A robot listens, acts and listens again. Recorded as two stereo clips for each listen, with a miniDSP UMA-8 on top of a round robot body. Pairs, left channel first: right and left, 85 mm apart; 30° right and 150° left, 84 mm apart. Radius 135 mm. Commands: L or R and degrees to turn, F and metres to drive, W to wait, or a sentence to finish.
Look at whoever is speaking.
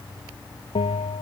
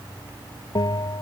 W
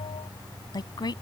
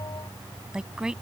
R130
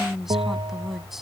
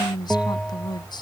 Found it: a woman speaking, straight ahead.